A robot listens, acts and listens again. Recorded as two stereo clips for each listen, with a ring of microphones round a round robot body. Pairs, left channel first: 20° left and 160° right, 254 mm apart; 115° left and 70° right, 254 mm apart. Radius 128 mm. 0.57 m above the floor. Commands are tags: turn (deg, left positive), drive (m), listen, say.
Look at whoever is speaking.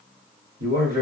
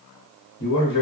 <turn deg="150"/>
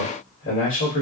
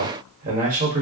<turn deg="-10"/>
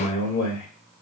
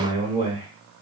<say>Found it: a man speaking, straight ahead, 1 to 2 m away.</say>